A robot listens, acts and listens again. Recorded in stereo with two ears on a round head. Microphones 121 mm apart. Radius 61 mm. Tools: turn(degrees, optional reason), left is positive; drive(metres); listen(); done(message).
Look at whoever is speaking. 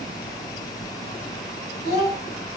turn(degrees=45, reason="The child speaking: about 45° left or 135° left.")
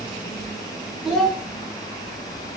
done("Facing the child speaking.")